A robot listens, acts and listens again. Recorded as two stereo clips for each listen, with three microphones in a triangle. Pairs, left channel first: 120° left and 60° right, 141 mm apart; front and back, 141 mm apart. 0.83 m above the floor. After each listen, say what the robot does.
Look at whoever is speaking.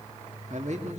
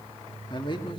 Turn 45° right.
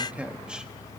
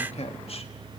Turn 20° left.
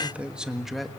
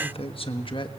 Turn 30° left.
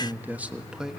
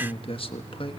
Turn 25° left.
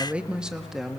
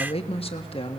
Turn 30° left.
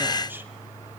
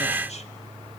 Keep listening.
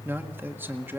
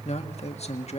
Turn 10° left.
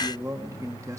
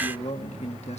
Found it: a man speaking, straight ahead, 1 to 2 m away.